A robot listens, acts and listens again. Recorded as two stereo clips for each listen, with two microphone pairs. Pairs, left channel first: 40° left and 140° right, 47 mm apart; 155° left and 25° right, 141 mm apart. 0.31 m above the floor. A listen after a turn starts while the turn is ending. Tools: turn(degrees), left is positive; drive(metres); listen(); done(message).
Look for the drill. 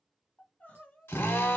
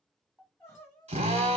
turn(degrees=15)
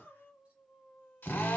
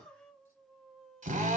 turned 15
done("Facing the drill, under 1 m away.")